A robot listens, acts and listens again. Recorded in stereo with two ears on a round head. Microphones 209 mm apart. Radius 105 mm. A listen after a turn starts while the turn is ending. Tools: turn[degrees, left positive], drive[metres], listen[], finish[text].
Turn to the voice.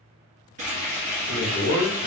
Thought: The man speaking: about 60° left or 120° left.
Action: turn[60]
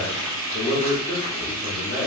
Thought: So it is at 40° left.
Action: turn[40]
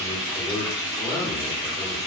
Thought: The man speaking is now 10° left.
Action: turn[10]
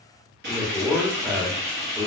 Action: finish[Facing the man speaking.]